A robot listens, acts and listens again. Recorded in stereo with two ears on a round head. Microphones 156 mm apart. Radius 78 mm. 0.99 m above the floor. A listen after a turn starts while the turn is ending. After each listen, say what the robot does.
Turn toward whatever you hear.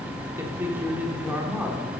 Turn 30° right.
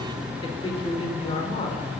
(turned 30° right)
Turn 35° left.
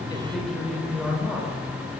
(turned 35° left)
Found it: a man speaking, straight ahead, 2 to 4 m away.